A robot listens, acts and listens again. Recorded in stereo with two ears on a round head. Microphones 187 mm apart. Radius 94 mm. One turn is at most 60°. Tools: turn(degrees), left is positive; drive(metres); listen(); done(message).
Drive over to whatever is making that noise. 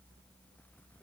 listen()
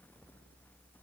listen()
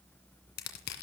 turn(degrees=50)
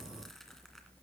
listen()
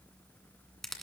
drive(metres=1.0)
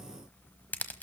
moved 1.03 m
turn(degrees=10)
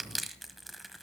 drive(metres=1.0)
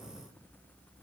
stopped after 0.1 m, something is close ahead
listen()
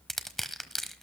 done("Arrived at the crushing, straight ahead.")